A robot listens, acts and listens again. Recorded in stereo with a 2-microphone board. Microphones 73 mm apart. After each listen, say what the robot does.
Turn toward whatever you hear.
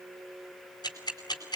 Turn 70° left.
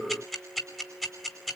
Facing the ticking.